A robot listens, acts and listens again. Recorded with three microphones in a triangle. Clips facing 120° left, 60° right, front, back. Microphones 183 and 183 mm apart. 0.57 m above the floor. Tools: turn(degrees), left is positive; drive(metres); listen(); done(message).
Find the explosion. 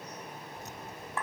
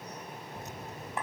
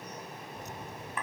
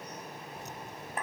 turn(degrees=-100)
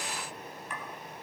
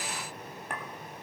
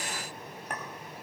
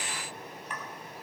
done("I heard an explosion from this way, but can't make it out now.")